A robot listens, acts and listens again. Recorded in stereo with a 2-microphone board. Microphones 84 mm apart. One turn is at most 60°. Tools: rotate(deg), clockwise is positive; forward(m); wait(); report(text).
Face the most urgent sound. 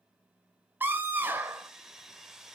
rotate(25)
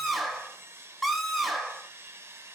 report("Found it: a scream, straight ahead.")